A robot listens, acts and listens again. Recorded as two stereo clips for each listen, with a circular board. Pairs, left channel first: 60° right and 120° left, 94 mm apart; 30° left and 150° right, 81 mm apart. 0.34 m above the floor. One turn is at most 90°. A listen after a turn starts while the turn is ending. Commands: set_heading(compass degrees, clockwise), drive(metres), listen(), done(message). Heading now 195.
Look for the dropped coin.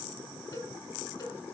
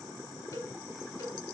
listen()
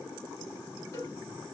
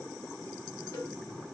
listen()
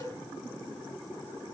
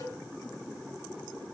done("I can't make out a dropped coin to turn to.")